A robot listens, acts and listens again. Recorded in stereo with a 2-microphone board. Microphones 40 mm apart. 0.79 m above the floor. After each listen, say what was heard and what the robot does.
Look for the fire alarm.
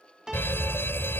The fire alarm: about 75° left or 105° left. Turn 75° left.
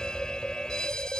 So it is at 20° left. Turn 20° left.
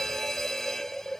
The fire alarm is now 10° left. Turn 10° left.
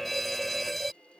Found it: a fire alarm, straight ahead.